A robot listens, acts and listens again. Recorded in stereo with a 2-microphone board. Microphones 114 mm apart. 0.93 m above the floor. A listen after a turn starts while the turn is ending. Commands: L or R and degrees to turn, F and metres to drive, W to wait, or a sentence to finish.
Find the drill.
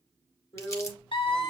L60
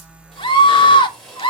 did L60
Found it: a drill, straight ahead, 2 to 4 m away.